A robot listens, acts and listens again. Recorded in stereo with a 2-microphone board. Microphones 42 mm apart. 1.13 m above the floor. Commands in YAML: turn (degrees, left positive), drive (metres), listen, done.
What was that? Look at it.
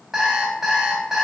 turn: -30
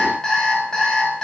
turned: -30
turn: 15
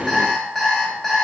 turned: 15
done: "Facing the alarm clock, 2 to 4 m away."